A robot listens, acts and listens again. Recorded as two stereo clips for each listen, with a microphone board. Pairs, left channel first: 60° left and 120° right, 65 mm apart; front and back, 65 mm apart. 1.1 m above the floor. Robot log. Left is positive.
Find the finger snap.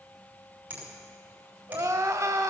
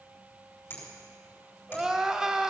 note: The finger snap: 55° right.
cmd yaw -55
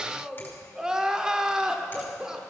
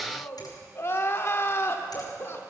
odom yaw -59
cmd idle
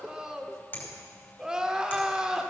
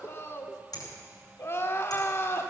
end: Facing the finger snap.